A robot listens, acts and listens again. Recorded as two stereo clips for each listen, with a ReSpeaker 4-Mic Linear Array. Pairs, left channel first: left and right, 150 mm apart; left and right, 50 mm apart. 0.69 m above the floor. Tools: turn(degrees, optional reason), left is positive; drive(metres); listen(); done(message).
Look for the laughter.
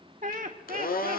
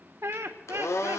turn(degrees=-65, reason="The laughter: about 65° right or 115° right.")
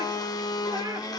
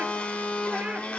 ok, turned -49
listen()
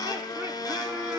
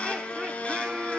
listen()
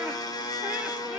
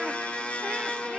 done("I heard laughter, but can't make it out now. It was about 15° right or 65° right.")